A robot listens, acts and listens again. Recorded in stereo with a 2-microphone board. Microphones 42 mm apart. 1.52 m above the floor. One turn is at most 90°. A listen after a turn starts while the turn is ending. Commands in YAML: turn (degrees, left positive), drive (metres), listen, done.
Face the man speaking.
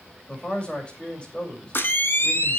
turn: 25
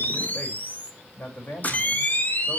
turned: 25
turn: 90
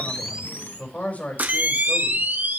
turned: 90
turn: 35
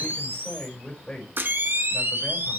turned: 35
turn: 15
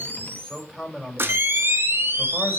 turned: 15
done: "Found it: a man speaking, straight ahead."